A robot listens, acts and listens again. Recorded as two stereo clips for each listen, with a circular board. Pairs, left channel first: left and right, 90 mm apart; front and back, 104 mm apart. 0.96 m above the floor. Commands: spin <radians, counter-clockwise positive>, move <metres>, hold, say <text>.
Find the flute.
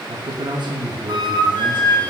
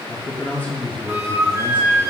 spin -2.09
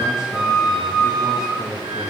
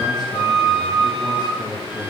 say Facing the flute.